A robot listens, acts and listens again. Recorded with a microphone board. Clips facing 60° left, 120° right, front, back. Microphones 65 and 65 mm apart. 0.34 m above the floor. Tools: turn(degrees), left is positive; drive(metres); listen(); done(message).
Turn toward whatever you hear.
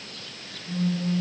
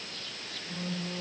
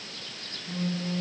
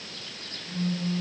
turn(degrees=-30)
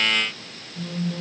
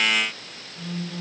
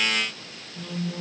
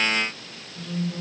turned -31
done("Found it: a phone buzzing, straight ahead, 2 to 4 m away.")